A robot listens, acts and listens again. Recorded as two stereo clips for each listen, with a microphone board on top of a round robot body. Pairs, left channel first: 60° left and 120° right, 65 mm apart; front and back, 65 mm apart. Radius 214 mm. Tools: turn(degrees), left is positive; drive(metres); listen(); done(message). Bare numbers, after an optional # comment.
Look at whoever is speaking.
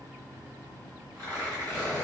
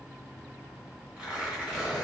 listen()
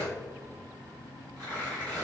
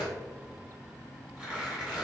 listen()
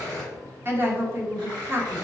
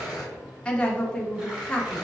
# The woman speaking: 70° right.
turn(-70)
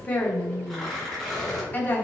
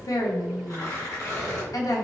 done("Found it: a woman speaking, straight ahead.")